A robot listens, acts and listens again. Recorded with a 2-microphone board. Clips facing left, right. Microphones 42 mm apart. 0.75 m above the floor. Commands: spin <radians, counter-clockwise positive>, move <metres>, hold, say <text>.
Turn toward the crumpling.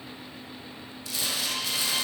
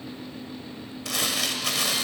spin -1.57
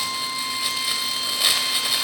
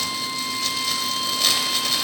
spin 0.26
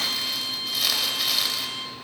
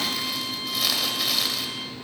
say Facing the crumpling, 1 to 2 m away.